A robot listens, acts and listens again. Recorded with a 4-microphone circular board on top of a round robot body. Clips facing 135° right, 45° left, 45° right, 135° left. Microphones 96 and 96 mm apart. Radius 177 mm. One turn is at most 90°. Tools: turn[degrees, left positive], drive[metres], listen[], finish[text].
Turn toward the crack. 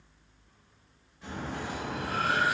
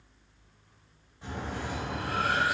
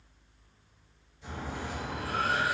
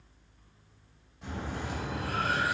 Thought: The crack: 105° left.
Action: turn[90]
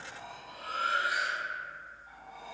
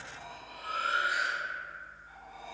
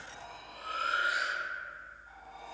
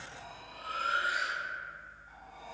Thought: Nothing new. It was at 15° left.
Action: turn[15]
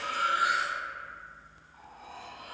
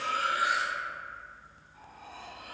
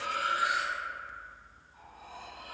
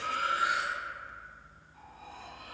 Action: finish[Facing where the crack came from. I can't hear it now.]